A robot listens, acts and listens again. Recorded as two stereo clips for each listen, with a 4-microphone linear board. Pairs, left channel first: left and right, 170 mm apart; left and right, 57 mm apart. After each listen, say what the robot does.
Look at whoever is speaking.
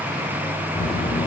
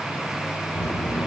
Turn 65° left.
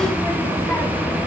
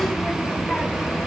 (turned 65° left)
Turn 15° left.
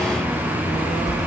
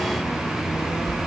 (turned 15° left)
Facing the child speaking.